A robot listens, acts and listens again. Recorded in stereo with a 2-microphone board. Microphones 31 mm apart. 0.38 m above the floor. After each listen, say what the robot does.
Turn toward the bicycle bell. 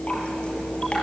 Keep listening.
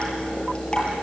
Keep listening.
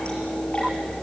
I can't make out a bicycle bell to turn to.